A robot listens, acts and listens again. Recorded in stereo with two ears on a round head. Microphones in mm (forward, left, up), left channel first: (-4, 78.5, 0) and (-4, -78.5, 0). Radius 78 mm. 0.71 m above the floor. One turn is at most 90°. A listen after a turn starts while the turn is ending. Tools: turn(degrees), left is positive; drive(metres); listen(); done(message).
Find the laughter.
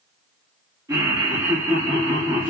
turn(degrees=-25)
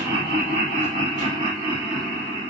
turn(degrees=-20)
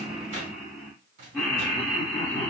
turn(degrees=15)
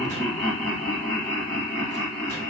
done("Found it: laughter, straight ahead, 1 to 2 m away.")